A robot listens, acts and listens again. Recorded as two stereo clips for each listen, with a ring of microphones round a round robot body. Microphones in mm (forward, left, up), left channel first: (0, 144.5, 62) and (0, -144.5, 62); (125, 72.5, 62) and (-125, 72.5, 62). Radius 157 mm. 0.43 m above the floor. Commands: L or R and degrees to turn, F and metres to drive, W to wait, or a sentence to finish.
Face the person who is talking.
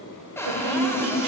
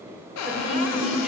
R95
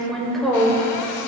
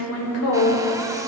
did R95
Found it: a woman speaking, straight ahead.